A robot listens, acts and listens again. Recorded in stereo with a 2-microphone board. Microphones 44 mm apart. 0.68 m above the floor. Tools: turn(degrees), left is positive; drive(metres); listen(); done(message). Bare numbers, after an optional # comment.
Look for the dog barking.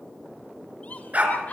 # The dog barking: about 35° right or 145° right.
turn(-35)
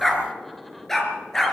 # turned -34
# So it is at 10° left.
turn(10)
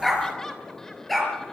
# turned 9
done("Found it: a dog barking, straight ahead.")